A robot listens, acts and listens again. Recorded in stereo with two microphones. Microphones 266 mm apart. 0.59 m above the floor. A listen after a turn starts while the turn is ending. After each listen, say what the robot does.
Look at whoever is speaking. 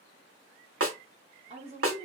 Turn 25° right.
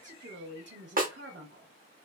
Turn 125° right.
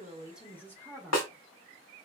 Turn 10° left.
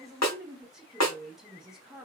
Found it: a woman speaking, straight ahead.